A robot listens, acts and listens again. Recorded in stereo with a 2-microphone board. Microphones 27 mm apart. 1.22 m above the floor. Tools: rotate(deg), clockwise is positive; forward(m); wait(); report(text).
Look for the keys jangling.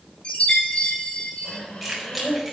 rotate(-30)
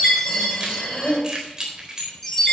rotate(25)
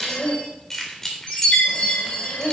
rotate(-15)
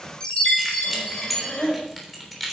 report("Facing the keys jangling.")